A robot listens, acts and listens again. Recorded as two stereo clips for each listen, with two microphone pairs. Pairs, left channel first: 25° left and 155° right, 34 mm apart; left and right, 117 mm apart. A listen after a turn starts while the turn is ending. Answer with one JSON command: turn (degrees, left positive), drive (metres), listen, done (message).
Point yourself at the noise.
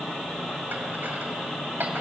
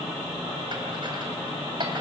{"turn": -140}
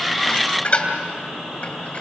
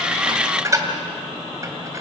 {"turn": -30}
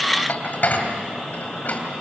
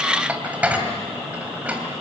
{"turn": -15}
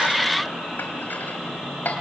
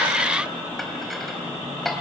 {"done": "Found it: dishes clattering, straight ahead."}